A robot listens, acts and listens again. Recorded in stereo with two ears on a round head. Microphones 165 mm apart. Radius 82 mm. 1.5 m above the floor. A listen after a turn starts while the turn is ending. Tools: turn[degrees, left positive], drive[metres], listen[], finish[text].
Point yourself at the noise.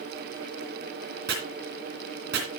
Thought: The chopping: about 60° right or 120° right.
Action: turn[-60]
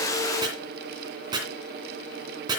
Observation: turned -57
Thought: So it is at 25° right.
Action: turn[-25]
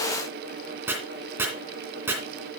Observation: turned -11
Thought: The chopping is now 15° right.
Action: turn[-15]
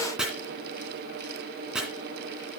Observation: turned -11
Action: finish[Found it: chopping, straight ahead.]